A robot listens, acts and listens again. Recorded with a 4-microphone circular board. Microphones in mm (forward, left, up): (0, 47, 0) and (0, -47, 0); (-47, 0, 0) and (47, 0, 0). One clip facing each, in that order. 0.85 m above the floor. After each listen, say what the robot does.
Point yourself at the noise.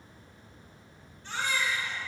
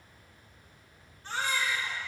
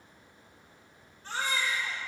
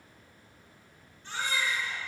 Turn 135° right.
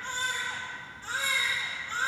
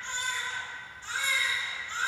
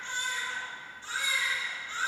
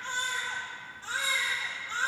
Turn 45° left.
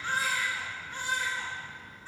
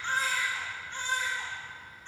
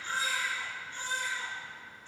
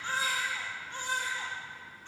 Facing the baby crying.